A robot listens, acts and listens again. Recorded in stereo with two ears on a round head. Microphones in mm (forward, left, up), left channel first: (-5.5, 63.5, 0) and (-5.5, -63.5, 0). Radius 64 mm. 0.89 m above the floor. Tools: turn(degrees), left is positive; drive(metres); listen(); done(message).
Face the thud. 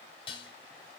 listen()
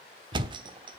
turn(degrees=-35)
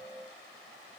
listen()
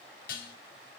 done("I heard a thud, but can't make it out now. It was about straight ahead or 110° right.")